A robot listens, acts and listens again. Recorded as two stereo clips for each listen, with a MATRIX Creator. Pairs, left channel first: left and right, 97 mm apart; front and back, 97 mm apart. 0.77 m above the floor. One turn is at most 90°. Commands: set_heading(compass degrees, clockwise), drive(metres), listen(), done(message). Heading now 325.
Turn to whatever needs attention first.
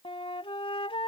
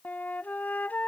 listen()
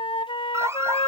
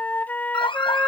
set_heading(355)
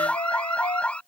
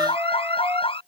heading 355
set_heading(340)
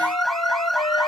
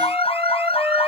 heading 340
done("Found it: an alarm, straight ahead.")